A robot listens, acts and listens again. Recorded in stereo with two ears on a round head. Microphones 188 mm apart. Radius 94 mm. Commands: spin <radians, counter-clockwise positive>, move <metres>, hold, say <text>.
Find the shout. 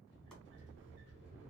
hold
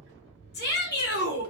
spin 0.87
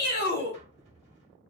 spin 1.13
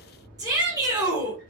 spin -0.35
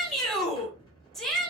say Facing the shout.